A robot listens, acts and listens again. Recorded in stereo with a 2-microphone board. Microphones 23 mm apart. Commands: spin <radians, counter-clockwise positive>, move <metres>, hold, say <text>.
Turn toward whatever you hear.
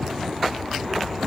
hold
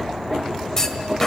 spin 0.35
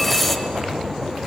say Found it: a clunk, straight ahead, 1 to 2 m away.